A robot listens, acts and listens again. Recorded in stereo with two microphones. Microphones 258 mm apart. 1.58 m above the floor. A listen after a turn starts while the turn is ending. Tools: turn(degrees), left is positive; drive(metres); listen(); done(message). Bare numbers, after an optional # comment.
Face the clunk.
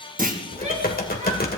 # The clunk: about 30° right or 150° right.
turn(-30)
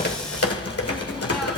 listen()
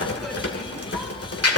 done("I heard a clunk, but can't make it out now. It was about straight ahead or 120° right.")